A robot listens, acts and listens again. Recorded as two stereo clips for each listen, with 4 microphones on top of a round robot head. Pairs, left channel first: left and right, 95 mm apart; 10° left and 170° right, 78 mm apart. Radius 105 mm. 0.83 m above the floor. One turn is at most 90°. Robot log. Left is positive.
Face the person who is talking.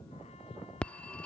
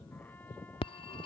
cmd idle
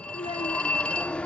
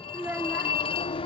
note: The child speaking: 125° left.
cmd yaw +90
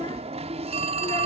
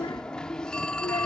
note: Nothing new. It was at 35° left.
cmd yaw +35
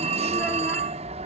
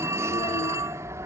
cmd idle
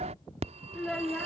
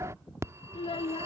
end: Facing the child speaking.